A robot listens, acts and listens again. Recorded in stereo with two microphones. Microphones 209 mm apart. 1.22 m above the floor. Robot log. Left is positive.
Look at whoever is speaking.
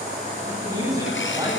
note: The man speaking: about 20° right or 160° right.
cmd yaw -20
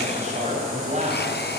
note: So it is at 145° right.
cmd yaw -145
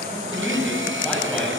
end: Found it: a man speaking, straight ahead.